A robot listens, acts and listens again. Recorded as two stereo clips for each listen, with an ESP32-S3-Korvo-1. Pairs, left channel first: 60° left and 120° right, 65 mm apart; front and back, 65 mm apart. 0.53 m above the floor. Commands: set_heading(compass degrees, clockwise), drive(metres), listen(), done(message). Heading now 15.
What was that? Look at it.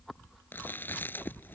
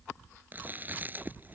set_heading(255)
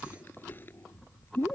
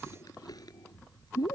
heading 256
done("Facing the chewing.")